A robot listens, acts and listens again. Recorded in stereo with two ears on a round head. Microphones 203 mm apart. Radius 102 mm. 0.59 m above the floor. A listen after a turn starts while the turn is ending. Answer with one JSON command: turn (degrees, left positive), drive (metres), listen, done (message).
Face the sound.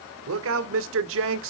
{"turn": -60}
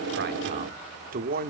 {"turn": -40}
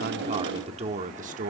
{"turn": -35}
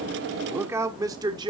{"turn": -20}
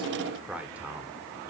{"done": "Found it: a man speaking, straight ahead, 1 to 2 m away."}